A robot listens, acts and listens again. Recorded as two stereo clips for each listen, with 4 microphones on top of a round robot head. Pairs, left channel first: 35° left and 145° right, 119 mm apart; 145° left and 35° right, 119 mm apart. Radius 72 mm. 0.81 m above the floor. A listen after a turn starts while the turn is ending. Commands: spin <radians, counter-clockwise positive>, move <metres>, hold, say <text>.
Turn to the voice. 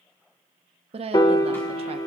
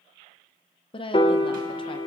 spin -3.05
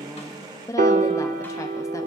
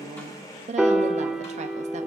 spin -0.44
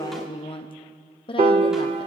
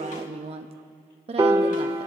say Facing the woman speaking, under 1 m away.